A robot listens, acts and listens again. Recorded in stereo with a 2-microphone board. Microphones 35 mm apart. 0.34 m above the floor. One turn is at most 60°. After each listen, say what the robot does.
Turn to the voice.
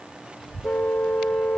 Turn 30° left.
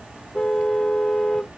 Turn 25° right.
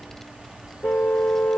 Facing the child speaking.